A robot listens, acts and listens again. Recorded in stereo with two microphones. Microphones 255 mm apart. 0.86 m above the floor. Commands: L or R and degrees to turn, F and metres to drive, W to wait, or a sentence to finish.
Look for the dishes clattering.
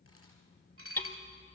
R55
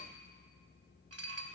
R65
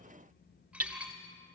Found it: dishes clattering, straight ahead.